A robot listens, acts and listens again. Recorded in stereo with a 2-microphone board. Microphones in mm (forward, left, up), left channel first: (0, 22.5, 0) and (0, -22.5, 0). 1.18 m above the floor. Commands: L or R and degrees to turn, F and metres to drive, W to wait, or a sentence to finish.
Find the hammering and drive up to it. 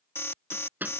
R45
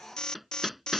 F1.0
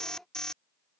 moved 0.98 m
W
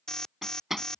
F1.0
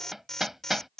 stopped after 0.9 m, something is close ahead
I am next to the hammering.